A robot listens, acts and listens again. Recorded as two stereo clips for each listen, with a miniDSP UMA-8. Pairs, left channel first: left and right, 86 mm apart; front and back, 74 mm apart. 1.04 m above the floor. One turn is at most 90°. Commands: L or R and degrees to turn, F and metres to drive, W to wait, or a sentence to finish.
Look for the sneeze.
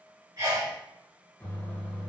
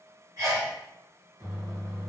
R90
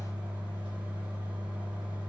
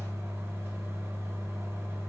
R45
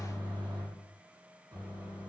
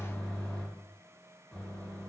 I heard a sneeze from this way, but can't make it out now.